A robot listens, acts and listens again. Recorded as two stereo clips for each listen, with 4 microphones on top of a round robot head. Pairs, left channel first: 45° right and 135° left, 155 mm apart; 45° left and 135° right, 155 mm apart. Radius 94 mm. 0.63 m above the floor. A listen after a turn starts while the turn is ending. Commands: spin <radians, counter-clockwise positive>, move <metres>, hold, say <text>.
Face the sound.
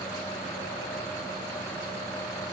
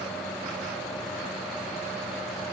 hold
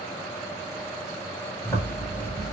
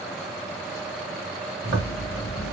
spin -2.09
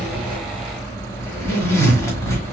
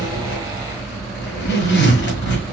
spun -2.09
spin 0.52
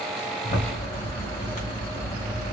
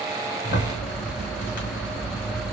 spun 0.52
say Facing the zipper.